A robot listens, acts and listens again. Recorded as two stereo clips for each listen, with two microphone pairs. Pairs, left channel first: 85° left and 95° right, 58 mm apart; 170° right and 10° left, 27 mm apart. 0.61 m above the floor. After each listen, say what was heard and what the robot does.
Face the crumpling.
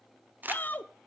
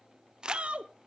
The crumpling: 45° right. Turn 45° right.
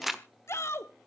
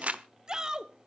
The crumpling is now 10° right. Turn 10° right.
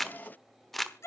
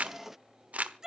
Facing the crumpling, 1 to 2 m away.